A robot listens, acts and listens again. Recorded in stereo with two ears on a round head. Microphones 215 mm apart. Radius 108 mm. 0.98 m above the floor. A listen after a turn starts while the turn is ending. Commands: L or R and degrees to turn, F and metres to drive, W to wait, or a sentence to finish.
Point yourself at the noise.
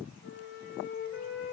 L50
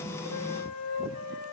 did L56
L75
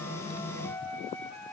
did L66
L10
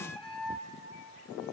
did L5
Found it: a flute, straight ahead, 2 to 4 m away.